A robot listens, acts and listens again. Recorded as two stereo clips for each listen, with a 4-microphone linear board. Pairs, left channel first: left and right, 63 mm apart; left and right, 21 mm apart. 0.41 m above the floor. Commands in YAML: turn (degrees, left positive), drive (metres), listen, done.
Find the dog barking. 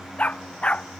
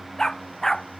turn: 20
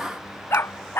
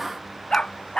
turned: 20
turn: 140
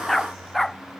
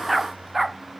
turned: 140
done: "Facing the dog barking."